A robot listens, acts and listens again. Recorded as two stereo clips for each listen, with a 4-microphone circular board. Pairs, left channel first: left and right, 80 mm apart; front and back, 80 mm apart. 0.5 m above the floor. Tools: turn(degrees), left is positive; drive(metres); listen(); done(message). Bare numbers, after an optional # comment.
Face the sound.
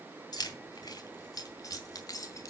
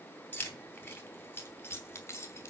# The keys jangling: 50° left.
turn(50)
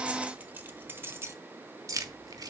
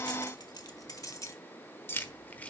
# The keys jangling is now 70° right.
turn(-70)
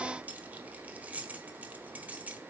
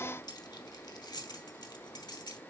# The keys jangling is now 20° right.
turn(-20)
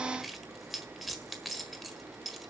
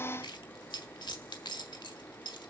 done("Facing the keys jangling.")